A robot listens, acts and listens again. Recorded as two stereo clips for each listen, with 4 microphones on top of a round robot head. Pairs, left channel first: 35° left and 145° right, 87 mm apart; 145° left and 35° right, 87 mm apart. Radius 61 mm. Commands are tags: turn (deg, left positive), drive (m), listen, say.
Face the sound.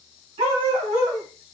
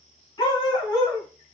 <turn deg="-160"/>
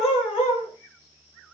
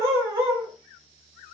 <turn deg="25"/>
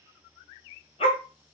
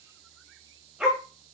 <turn deg="50"/>
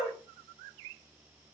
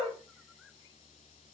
<turn deg="15"/>
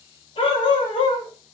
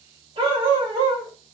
<say>Facing the dog barking, 1 to 2 m away.</say>